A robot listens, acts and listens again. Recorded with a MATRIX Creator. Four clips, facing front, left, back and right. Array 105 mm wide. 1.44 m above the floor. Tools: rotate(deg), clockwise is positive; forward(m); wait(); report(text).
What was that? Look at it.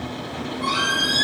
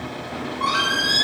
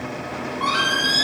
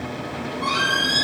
rotate(-130)
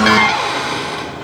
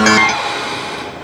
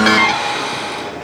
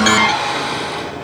report("Found it: a squeak, straight ahead, 1 to 2 m away.")